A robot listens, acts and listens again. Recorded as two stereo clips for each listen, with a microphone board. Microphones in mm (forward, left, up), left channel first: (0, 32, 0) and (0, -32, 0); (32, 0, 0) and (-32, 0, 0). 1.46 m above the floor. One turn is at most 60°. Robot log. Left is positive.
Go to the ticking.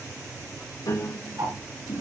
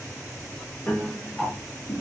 note: The ticking: 85° right.
cmd yaw -60
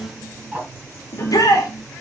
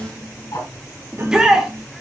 note: The ticking is now 15° right.
cmd yaw -15
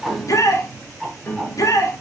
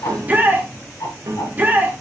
cmd fwd 1.0
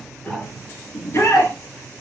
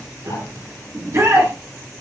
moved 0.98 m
cmd idle
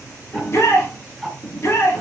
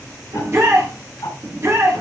cmd fwd 1.0
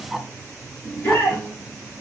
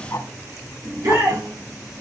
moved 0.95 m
cmd fwd 1.0
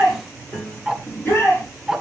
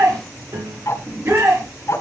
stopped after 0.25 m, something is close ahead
note: The ticking is now 15° right.
cmd yaw -15
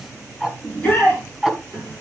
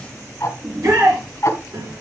end: Arrived at the ticking, straight ahead.